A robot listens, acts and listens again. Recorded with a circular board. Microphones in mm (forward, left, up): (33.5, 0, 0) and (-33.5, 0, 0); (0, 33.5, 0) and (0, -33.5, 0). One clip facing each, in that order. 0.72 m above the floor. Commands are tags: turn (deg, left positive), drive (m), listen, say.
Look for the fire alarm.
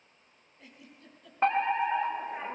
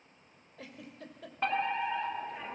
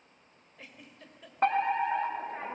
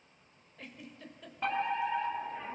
<turn deg="60"/>
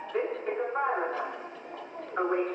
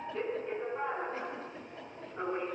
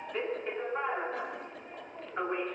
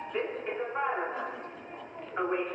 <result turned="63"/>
<say>Facing the fire alarm.</say>